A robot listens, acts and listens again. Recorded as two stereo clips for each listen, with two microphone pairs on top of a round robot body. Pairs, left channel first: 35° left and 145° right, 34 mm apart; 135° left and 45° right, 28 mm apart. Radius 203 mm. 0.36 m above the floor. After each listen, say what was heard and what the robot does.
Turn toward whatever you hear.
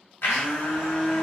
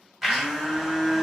The blender: 45° left. Turn 45° left.
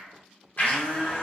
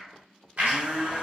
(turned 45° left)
Found it: a blender, straight ahead.